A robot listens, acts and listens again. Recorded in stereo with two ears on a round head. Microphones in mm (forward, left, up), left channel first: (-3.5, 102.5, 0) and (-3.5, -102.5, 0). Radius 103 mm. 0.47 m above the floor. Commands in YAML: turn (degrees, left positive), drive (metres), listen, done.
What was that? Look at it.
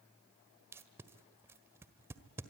turn: -30
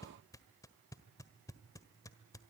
turn: 15
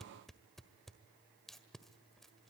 done: "Found it: tape being pulled, straight ahead, 1 to 2 m away."